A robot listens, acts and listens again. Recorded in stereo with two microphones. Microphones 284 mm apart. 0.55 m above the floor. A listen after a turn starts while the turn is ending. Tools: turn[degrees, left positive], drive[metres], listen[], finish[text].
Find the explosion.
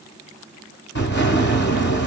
Thought: The explosion: about 40° left or 140° left.
Action: turn[40]
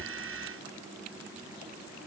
Action: listen[]
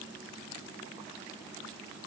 Action: finish[I heard an explosion, but can't make it out now. It was about straight ahead or 100° left.]